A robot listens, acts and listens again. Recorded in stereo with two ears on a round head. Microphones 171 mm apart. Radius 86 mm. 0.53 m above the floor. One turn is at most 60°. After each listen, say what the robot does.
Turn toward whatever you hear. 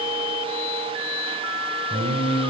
Turn 45° right.
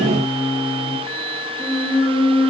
Facing the singing, 1 to 2 m away.